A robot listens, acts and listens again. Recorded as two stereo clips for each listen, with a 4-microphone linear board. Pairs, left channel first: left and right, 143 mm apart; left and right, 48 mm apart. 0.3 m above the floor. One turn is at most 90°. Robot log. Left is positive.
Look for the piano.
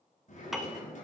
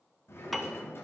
cmd yaw +30
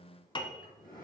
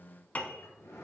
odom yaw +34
note: So it is at 150° left.
cmd yaw +90
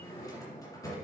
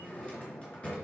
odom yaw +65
note: Nothing new. It was at 85° left.
cmd yaw +85
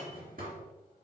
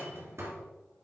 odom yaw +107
note: Nothing new. It was at 25° right.
cmd yaw -25
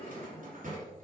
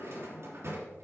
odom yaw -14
note: Nothing new. It was at 10° right.
cmd yaw -10
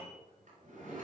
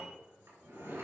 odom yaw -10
end: Found it: a piano, straight ahead.